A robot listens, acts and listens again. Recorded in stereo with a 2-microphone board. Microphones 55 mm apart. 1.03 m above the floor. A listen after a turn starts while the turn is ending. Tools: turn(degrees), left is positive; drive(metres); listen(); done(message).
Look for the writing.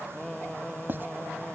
turn(degrees=-40)
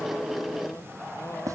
turn(degrees=-105)
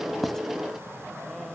listen()
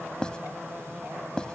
turn(degrees=20)
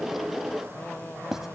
done("Facing the writing.")